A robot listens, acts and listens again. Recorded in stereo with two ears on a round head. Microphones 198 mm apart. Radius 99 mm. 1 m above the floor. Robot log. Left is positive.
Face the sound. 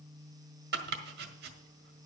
note: The chopping: about 50° right or 130° right.
cmd yaw -50
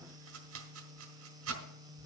note: So it is at 80° right.
cmd yaw -80
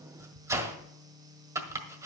note: The chopping is now 15° right.
cmd yaw -15
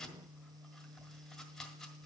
end: Found it: chopping, straight ahead.